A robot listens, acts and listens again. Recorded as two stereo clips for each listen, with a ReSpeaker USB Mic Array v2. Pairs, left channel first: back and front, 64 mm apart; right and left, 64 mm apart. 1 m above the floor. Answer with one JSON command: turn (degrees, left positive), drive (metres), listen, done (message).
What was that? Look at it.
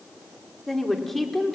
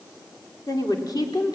{"turn": -95}
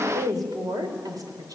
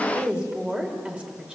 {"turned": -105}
{"turn": 20}
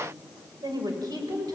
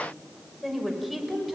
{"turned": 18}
{"done": "Facing the woman speaking, over 4 m away."}